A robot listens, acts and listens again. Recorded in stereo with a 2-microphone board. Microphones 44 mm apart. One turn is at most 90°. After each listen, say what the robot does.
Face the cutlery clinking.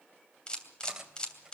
Turn 20° right.
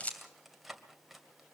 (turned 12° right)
Found it: cutlery clinking, straight ahead.